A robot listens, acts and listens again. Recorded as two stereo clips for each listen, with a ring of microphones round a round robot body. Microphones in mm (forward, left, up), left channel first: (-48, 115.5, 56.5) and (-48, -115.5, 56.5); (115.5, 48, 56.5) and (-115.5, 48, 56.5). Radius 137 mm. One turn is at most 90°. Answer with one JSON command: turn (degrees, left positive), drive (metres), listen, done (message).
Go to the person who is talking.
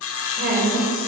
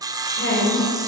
{"turn": -45}
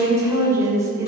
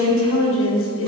{"turn": -15}
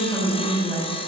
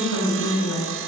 {"drive": 1.0}
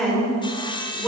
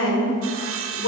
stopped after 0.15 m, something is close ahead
{"done": "Blocked. The woman speaking is further on, straight ahead."}